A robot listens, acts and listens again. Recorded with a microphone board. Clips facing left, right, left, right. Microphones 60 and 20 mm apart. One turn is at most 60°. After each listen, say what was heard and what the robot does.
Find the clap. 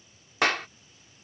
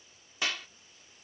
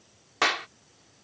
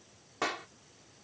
The clap: about 60° left or 120° left. Turn 60° left.
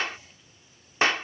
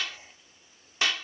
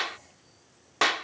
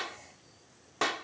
So it is at 45° left. Turn 45° left.
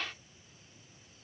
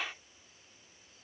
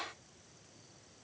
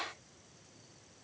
The clap is now 10° right. Turn 10° right.
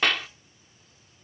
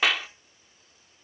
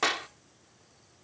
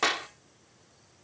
Found it: a clap, straight ahead.